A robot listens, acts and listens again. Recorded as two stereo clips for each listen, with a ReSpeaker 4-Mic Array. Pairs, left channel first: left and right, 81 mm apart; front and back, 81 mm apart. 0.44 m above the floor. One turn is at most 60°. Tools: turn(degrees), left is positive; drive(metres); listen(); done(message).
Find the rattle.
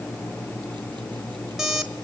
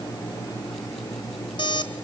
listen()
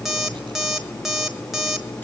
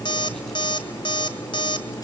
listen()
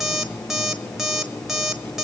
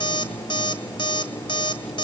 done("I can't make out a rattle, only an alarm clock.")